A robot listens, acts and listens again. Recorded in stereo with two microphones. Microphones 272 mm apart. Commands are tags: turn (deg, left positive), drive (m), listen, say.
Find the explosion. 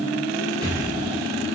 <turn deg="-30"/>
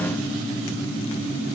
<listen/>
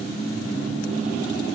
<say>I heard an explosion, but can't make it out now. It was about 15° left or 135° right.</say>